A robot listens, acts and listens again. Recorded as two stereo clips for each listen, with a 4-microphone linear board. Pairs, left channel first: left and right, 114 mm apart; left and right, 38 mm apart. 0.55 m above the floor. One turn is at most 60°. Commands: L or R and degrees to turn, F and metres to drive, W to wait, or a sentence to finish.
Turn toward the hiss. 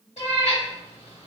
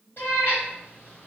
W
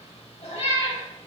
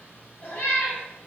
W
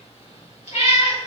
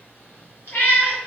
I can't make out a hiss to turn to.